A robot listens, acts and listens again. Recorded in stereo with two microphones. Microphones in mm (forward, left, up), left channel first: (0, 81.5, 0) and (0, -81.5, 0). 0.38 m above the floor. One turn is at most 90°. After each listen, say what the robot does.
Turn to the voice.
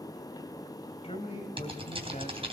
Turn 50° left.
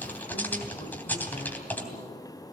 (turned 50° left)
Keep listening.
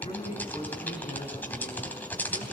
Turn 40° left.
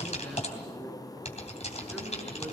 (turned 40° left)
Keep listening.
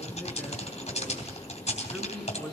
Found it: a man speaking, straight ahead, over 4 m away.